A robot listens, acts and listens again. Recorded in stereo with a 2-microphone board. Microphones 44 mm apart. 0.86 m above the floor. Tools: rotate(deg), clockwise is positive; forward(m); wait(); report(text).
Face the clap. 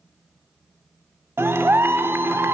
rotate(65)
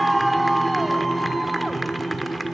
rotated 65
report("Found it: a clap, straight ahead.")